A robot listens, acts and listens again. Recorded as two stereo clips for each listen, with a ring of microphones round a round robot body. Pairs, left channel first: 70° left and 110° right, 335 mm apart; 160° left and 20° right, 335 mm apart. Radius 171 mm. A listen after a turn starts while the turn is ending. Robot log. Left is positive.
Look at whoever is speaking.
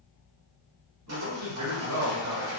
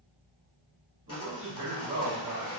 note: The man speaking: 70° right.
cmd yaw -70
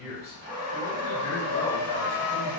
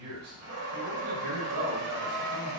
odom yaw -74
end: Found it: a man speaking, straight ahead.